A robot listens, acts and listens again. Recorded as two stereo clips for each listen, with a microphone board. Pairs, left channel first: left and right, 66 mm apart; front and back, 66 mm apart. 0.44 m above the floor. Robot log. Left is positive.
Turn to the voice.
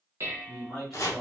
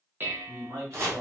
note: The man speaking: 170° left.
cmd yaw +170
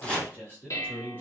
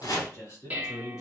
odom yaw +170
note: The man speaking is now 35° left.
cmd yaw +35
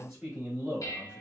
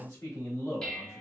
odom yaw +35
note: The man speaking is now 20° right.
cmd yaw -20
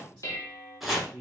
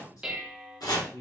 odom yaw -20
end: Facing the man speaking.